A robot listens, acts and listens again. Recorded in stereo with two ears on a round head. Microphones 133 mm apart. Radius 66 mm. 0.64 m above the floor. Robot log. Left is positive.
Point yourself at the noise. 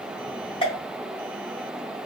note: The pop: about 40° left or 140° left.
cmd yaw +40
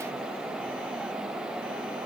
cmd idle
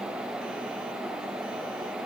end: I heard a pop, but can't make it out now. It was about straight ahead or 100° left.